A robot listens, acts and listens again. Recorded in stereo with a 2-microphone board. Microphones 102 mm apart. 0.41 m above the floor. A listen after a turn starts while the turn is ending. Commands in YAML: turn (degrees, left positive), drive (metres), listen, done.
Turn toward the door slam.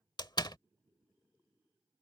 turn: 45
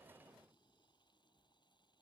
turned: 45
listen: true
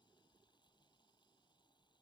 done: "I heard a door slam, but can't make it out now. It was about straight ahead or 90° left."